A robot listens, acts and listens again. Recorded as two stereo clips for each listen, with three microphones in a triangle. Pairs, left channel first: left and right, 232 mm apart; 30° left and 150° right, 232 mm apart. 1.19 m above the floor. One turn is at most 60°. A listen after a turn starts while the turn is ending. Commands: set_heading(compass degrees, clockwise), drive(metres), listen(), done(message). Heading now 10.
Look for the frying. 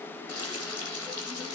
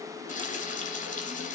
set_heading(310)
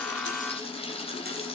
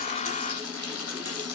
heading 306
set_heading(281)
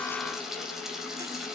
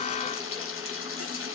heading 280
done("Found it: frying, straight ahead.")